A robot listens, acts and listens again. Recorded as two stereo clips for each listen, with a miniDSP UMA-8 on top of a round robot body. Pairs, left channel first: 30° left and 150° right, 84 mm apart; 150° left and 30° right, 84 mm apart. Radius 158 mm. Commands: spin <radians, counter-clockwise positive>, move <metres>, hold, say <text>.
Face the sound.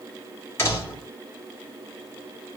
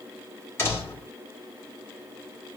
spin 1.57
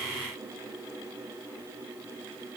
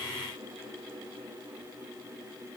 say Facing where the door slam came from. I can't hear it now.